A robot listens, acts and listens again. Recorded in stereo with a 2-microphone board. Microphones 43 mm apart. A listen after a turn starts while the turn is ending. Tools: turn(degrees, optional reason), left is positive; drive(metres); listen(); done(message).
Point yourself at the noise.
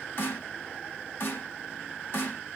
turn(degrees=55, reason="The snare drum: about 55° left or 125° left.")
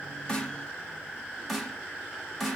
done("Facing the snare drum.")